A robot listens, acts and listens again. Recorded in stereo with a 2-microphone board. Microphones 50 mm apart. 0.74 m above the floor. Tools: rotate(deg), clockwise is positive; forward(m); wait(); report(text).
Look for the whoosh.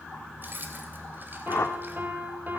rotate(-55)
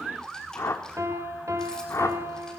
rotate(-70)
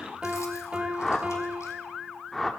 report("Found it: a whoosh, straight ahead, 1 to 2 m away.")